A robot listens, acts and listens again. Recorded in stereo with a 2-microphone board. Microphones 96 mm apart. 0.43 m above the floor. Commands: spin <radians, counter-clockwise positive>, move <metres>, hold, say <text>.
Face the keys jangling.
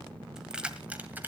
spin -0.52
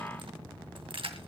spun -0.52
spin -1.92
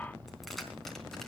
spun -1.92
hold
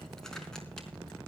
hold
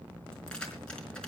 say I heard keys jangling from this way, but can't make it out now.